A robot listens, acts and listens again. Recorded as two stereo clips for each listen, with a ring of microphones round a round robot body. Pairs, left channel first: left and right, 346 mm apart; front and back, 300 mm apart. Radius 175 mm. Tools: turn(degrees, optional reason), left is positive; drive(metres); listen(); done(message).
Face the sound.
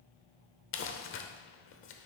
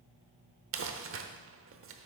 turn(degrees=140, reason="The crumpling: 140° left.")
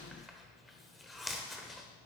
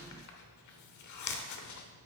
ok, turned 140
done("Facing the crumpling.")